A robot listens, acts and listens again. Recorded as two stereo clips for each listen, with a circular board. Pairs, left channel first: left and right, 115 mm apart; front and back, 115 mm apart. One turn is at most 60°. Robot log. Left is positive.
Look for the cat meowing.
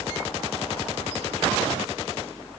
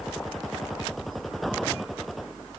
cmd idle
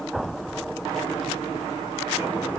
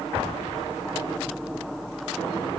cmd idle
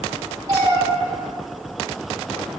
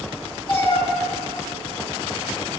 note: The cat meowing: 40° right.
cmd yaw -40
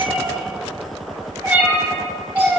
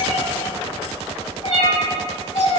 note: The cat meowing is now 20° right.
cmd yaw -20
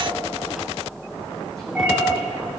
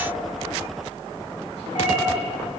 cmd idle
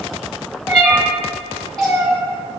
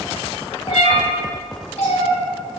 end: Found it: a cat meowing, straight ahead.